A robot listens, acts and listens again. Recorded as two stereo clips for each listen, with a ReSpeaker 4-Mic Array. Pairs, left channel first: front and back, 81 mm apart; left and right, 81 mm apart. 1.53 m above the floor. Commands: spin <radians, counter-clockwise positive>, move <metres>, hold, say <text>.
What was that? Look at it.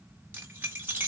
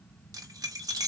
spin -2.01
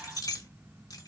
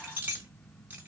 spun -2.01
spin -0.44
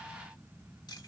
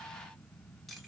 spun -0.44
hold
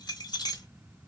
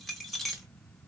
say Facing the keys jangling.